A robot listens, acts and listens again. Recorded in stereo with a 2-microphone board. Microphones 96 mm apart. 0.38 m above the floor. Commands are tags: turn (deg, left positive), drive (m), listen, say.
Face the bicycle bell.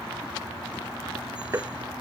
<listen/>
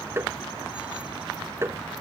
<listen/>
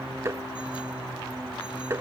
<say>I can't make out a bicycle bell, only tapping.</say>